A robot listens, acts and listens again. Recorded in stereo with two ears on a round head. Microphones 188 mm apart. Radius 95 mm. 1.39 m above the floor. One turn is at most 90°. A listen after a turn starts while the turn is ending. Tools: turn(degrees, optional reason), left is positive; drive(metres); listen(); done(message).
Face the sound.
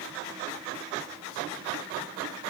listen()
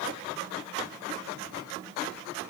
listen()
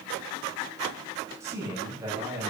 turn(degrees=-30)
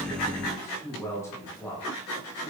turn(degrees=15, reason="So it is at 15° left.")
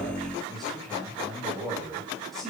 done("Found it: a man speaking, straight ahead.")